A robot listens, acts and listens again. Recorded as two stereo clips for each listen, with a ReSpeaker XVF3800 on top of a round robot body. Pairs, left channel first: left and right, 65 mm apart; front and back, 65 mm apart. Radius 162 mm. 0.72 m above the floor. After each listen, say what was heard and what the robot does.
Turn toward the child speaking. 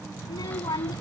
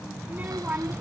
The child speaking: 110° left. Turn 110° left.
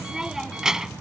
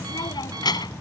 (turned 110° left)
The child speaking is now 10° right. Turn 10° right.
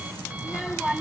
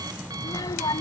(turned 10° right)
Facing the child speaking.